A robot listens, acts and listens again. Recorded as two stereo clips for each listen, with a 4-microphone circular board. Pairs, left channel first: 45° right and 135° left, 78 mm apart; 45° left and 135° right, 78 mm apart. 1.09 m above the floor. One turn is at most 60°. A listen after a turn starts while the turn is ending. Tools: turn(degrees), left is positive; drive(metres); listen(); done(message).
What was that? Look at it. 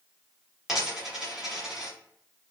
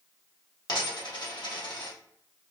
turn(degrees=55)
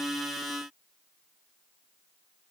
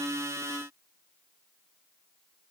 done("I heard a dropped coin from this way, but can't make it out now.")